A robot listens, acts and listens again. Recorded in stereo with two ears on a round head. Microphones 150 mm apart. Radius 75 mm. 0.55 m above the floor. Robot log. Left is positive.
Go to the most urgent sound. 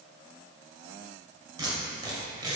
cmd idle
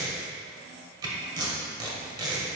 cmd idle
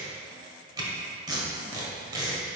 end: I can't make out anything urgent, only tape being pulled.